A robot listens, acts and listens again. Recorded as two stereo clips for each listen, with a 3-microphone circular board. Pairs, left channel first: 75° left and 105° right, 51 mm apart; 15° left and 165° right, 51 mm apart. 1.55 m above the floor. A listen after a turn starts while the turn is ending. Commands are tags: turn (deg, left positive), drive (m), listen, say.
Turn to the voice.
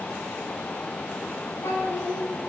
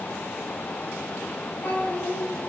<turn deg="75"/>
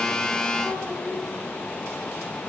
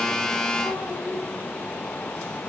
<say>Facing the child speaking, over 4 m away.</say>